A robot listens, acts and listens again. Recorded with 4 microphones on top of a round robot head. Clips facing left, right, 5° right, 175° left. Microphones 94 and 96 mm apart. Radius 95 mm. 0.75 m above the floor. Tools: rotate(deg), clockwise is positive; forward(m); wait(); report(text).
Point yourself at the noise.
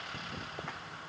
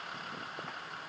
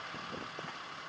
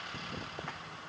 wait()
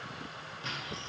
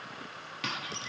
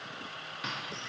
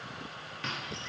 rotate(85)
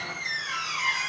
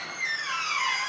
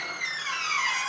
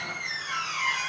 rotate(35)
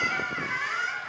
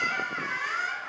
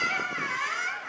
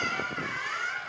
report("Found it: a squeak, straight ahead.")